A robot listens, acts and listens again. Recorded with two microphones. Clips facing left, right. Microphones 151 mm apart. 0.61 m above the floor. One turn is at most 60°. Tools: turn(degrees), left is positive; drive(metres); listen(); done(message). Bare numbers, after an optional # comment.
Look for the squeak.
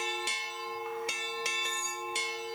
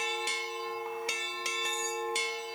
listen()
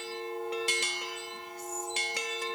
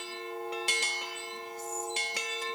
listen()
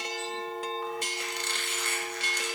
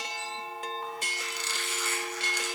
# The squeak: about 60° left or 120° left.
turn(60)
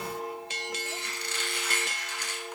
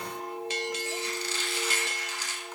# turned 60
# So it is at 60° left.
turn(60)
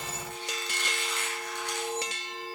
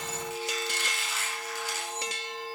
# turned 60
done("Facing the squeak, 2 to 4 m away.")